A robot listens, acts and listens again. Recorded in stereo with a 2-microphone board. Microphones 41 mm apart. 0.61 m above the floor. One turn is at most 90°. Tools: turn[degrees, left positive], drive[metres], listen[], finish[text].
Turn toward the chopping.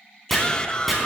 Action: turn[30]
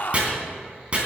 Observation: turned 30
Thought: So it is at 30° right.
Action: turn[-30]
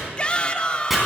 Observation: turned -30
Action: finish[Found it: chopping, straight ahead.]